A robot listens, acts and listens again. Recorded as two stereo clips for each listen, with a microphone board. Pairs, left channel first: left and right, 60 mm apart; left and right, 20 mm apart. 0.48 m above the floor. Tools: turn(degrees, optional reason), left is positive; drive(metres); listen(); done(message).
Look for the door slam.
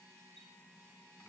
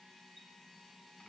listen()
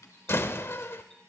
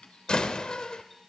turn(degrees=45, reason="The door slam: about 45° left or 135° left.")
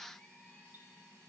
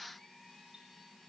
listen()
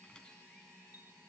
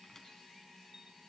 done("I heard a door slam, but can't make it out now. It was about straight ahead or 90° left.")